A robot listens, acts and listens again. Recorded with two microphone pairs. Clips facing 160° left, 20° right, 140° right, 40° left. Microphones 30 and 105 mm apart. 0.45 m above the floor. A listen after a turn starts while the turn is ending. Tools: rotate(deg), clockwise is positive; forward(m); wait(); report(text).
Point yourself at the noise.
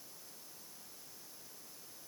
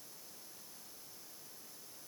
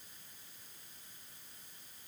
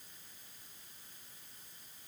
wait()
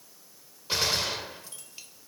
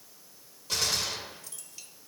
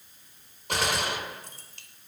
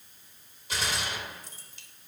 rotate(150)
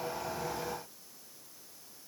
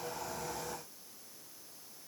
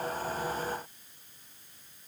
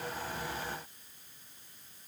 report("Facing where the gunshot came from. I can't hear it now.")